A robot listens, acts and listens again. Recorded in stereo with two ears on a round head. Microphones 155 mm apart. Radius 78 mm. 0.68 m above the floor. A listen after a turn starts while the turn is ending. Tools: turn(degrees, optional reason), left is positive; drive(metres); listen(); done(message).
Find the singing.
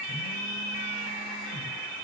listen()
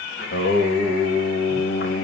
turn(degrees=65, reason="The singing: about 65° left or 115° left.")
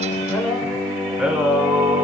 turn(degrees=-10, reason="So it is at 10° right.")
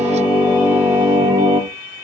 turn(degrees=-25, reason="The singing is now 25° right.")
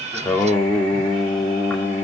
turn(degrees=10, reason="The singing is now 10° left.")
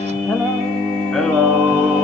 done("Found it: singing, straight ahead.")